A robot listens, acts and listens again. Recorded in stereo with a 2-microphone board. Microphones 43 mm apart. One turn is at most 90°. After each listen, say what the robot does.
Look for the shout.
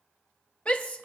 Turn 35° left.
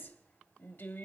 Turn 90° left.
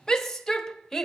Turn 10° left.
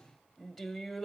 Facing the shout, 1 to 2 m away.